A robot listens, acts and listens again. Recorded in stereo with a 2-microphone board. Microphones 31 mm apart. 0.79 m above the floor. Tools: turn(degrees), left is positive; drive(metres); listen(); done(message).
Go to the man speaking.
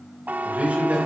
turn(degrees=-50)
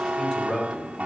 drive(metres=1.0)
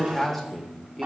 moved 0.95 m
drive(metres=1.0)
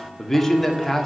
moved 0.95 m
turn(degrees=10)
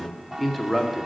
drive(metres=1.0)
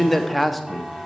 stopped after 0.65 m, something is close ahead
done("Arrived at the man speaking, straight ahead.")